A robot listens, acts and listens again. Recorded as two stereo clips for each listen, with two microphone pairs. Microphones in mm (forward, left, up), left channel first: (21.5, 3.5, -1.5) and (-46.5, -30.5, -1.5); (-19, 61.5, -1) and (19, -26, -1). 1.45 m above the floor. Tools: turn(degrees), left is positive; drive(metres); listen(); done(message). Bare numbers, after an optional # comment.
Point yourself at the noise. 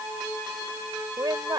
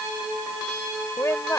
# The woman speaking: 175° left.
turn(175)
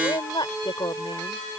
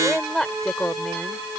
# The woman speaking is now 30° left.
turn(30)
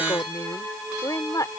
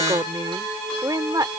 # The woman speaking is now 15° right.
turn(-15)
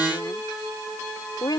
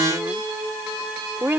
done("Facing the woman speaking.")